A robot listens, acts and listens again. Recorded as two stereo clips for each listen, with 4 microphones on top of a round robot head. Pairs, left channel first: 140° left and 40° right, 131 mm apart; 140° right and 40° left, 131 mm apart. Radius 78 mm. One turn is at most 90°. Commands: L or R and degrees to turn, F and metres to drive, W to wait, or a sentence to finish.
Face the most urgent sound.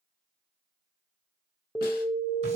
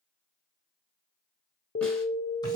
R90
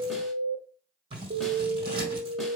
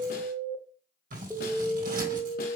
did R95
R50
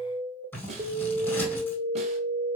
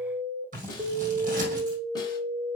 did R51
Found it: an alarm, straight ahead.